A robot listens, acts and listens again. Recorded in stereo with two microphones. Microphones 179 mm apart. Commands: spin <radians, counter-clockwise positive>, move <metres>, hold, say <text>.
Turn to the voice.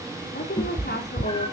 spin 1.13
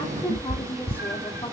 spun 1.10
spin 0.61
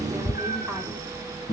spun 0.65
hold
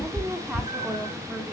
say Found it: a woman speaking, straight ahead, 2 to 4 m away.